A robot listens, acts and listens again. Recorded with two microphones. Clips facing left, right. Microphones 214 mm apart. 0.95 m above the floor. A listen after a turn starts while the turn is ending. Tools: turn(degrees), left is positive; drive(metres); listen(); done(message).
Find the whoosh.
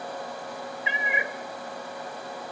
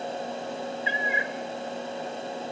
listen()
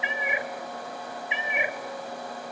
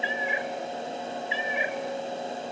listen()
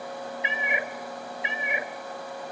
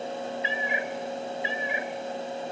done("I can't make out a whoosh, only a cat meowing.")